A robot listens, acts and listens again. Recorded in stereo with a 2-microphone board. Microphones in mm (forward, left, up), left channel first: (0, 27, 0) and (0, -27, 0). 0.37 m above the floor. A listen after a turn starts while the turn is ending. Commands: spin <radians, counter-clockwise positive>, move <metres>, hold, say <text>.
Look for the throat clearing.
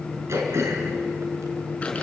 spin -1.05
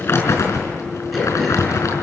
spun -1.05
hold
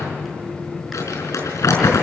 hold
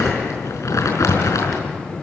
say I heard throat clearing, but can't make it out now. It was about straight ahead or 60° right.